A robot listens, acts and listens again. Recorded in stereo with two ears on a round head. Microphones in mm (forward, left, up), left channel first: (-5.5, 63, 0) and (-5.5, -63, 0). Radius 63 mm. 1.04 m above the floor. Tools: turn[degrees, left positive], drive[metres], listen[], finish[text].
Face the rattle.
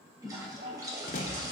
Thought: The rattle: about 60° left or 120° left.
Action: turn[60]
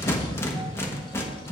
Thought: So it is at 20° left.
Action: turn[20]
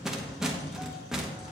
Action: finish[Found it: a rattle, straight ahead.]